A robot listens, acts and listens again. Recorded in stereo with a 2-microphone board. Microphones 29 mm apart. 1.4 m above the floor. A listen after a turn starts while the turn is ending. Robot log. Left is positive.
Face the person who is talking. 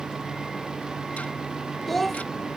cmd yaw +30
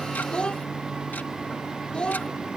note: So it is at 145° left.
cmd yaw +145
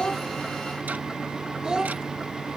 note: The child speaking is now 30° right.
cmd yaw -30
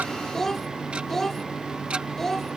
note: The child speaking is now 10° left.
cmd yaw +10
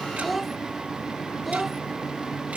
end: Facing the child speaking.